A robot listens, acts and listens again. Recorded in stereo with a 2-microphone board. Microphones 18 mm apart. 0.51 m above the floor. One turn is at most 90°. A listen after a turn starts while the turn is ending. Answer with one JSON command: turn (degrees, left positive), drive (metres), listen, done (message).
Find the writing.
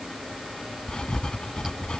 {"turn": 50}
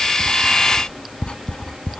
{"turn": 80}
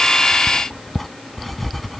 {"turn": 20}
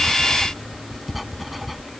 {"done": "Found it: writing, straight ahead."}